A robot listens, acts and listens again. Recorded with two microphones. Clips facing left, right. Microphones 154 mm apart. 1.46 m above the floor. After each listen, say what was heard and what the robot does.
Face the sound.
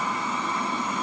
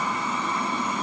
Keep listening.
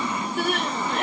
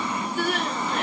The crying: about 60° left or 120° left. Turn 60° left.
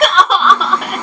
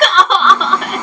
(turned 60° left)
Found it: crying, straight ahead, 1 to 2 m away.